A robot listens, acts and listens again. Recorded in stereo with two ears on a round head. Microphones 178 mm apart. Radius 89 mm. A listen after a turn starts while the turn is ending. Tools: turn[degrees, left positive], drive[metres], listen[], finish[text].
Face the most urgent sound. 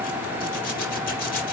Action: listen[]
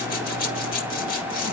Action: listen[]
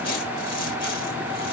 Action: finish[I can't make out anything urgent to turn to.]